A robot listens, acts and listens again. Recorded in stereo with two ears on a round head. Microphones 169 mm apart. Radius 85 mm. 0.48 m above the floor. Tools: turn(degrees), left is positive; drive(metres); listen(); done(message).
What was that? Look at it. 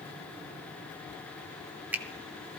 turn(degrees=-30)
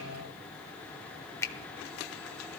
turn(degrees=15)
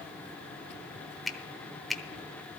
done("Facing the finger snap, under 1 m away.")